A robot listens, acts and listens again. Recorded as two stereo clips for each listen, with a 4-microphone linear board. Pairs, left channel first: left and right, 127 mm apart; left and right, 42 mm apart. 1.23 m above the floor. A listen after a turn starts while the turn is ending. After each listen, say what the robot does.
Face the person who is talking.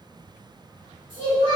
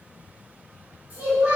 Turn 40° right.
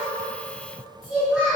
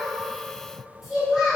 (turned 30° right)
Turn 10° right.
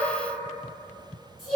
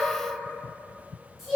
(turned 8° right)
Found it: a child speaking, straight ahead, 1 to 2 m away.